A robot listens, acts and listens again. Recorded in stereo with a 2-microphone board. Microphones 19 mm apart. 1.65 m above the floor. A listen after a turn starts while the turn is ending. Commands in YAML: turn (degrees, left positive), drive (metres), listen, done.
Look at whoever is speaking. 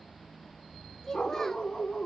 turn: 25
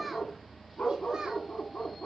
listen: true
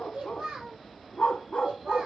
turn: -65
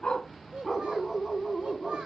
turn: -45
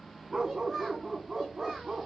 done: "Found it: a child speaking, straight ahead."